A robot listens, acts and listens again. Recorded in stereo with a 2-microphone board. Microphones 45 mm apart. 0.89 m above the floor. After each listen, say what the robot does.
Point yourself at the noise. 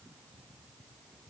Keep listening.
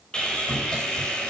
Turn 20° left.
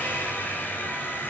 Turn 140° left.
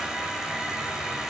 Turn 15° right.
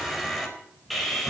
Facing the sawing, over 4 m away.